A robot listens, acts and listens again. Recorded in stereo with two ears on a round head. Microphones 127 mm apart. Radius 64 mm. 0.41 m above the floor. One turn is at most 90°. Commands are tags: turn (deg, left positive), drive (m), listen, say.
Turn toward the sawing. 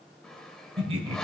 <turn deg="30"/>
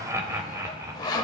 <turn deg="90"/>
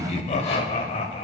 <turn deg="55"/>
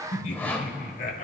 <turn deg="15"/>
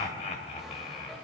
<listen/>
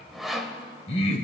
<say>Found it: sawing, straight ahead.</say>